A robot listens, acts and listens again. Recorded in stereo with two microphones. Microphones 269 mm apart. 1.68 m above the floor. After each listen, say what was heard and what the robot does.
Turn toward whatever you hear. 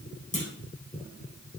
The clunk: about 25° left or 155° left. Turn 25° left.
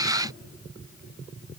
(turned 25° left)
Keep listening.
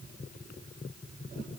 I heard a clunk, but can't make it out now. It was about straight ahead or 130° left.